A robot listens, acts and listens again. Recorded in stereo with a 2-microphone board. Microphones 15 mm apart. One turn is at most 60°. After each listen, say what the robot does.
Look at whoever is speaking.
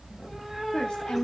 Turn 60° left.
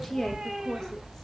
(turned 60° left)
Turn 25° left.
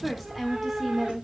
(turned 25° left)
Facing the woman speaking.